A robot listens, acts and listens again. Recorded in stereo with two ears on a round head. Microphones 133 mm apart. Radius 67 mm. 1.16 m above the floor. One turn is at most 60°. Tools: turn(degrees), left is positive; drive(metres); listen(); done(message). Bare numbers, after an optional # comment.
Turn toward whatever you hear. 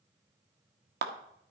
# The clap: about 75° right or 105° right.
turn(-60)
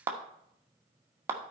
# So it is at 15° right.
turn(-15)
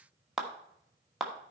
done("Found it: a clap, straight ahead.")